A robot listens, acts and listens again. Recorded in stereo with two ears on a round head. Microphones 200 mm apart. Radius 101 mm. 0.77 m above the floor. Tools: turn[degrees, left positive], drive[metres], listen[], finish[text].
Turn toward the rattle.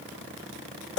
Action: listen[]
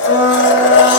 Action: listen[]
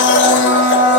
Action: finish[I can't make out a rattle to turn to.]